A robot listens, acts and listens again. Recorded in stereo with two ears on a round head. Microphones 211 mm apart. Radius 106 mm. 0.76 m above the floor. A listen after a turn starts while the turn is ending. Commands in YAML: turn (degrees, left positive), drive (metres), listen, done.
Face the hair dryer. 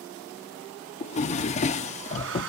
turn: -60
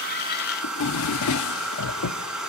done: "Facing the hair dryer."